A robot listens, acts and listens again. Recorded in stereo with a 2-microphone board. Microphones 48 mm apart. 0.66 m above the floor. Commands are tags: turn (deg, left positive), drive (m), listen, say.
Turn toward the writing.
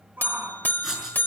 <turn deg="-30"/>
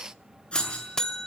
<turn deg="20"/>
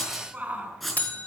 <say>Facing the writing.</say>